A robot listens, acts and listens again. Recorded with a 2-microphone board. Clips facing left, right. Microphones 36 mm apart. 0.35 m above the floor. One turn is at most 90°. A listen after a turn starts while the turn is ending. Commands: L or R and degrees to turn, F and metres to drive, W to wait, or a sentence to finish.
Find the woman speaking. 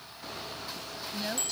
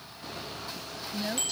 L30
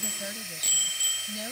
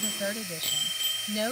R45
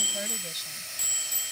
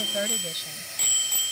W
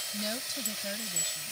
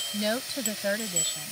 R50
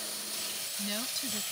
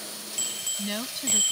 R20
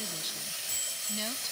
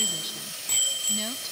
W
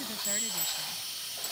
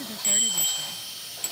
Found it: a woman speaking, straight ahead.